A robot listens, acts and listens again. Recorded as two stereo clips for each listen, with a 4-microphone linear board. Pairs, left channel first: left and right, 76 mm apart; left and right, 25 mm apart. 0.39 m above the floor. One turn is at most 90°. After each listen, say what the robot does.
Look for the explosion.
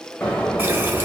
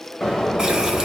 Turn 30° left.
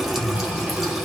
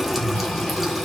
Keep listening.
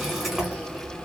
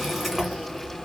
I heard an explosion, but can't make it out now. It was about 15° right or 135° left.